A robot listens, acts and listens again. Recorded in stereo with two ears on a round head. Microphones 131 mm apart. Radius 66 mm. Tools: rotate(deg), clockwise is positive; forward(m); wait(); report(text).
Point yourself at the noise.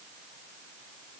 wait()
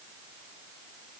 wait()
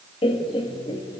rotate(-40)
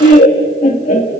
rotate(-125)
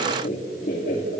rotate(-60)
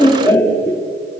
rotate(-15)
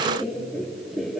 report("Found it: laughter, straight ahead, 2 to 4 m away.")